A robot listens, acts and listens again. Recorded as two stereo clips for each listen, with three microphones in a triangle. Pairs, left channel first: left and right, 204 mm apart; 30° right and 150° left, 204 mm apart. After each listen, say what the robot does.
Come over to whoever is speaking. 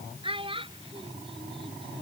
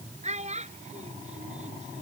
Turn 155° right.
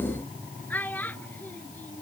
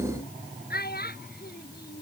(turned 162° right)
Turn 10° left.
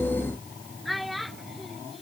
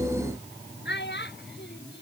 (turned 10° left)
Drive 1.0 m forward.
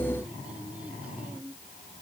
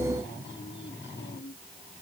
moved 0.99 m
Keep listening.
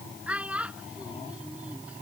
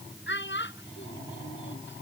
Drive 1.0 m forward.
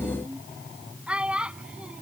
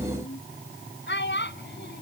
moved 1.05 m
Drive 1.0 m forward.
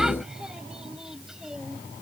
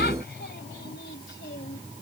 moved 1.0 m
Keep listening.
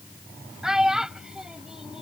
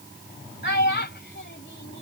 Drive 1.0 m forward.
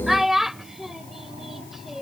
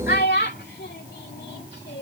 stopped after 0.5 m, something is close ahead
Arrived at the child speaking, straight ahead.